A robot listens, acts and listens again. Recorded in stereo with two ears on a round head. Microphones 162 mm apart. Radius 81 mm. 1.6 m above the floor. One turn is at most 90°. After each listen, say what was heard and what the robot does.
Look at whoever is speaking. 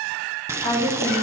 The woman speaking: about 30° left or 150° left. Turn 30° left.
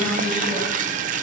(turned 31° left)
Keep listening.
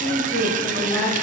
So it is at 15° left. Turn 15° left.
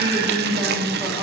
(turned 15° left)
The woman speaking is now 10° left. Turn 10° left.
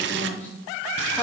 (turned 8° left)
The woman speaking is now 15° left. Turn 15° left.
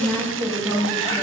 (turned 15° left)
Found it: a woman speaking, straight ahead.